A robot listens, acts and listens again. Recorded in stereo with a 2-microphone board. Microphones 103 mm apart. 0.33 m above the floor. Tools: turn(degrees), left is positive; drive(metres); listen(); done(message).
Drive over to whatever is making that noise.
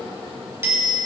turn(degrees=-20)
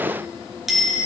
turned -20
drive(metres=1.0)
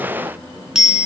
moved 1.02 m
drive(metres=1.0)
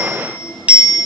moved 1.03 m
turn(degrees=-15)
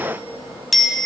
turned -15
drive(metres=1.0)
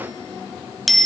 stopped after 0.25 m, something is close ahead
done("I am next to the bicycle bell.")